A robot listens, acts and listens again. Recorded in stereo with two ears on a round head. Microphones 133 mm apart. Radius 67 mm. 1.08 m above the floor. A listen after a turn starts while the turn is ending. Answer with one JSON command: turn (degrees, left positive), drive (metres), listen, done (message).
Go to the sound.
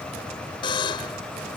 {"turn": 35}
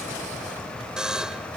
{"drive": 1.0}
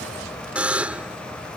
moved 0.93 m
{"turn": -10}
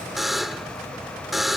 {"drive": 1.0}
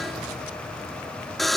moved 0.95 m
{"drive": 1.0}
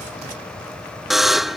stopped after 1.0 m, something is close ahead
{"done": "I am next to the buzzer."}